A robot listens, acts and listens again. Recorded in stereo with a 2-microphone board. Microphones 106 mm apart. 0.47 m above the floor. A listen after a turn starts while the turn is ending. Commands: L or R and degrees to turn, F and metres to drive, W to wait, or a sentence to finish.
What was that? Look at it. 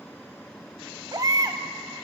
R35
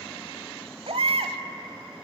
R110
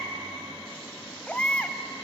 L10
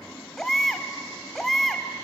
Facing the baby crying, 1 to 2 m away.